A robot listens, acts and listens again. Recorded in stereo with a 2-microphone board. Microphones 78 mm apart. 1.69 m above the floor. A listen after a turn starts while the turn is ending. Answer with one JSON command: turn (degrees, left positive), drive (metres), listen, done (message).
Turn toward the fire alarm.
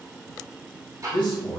{"listen": true}
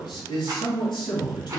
{"listen": true}
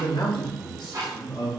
{"done": "I can't make out a fire alarm, only a man speaking and ticking."}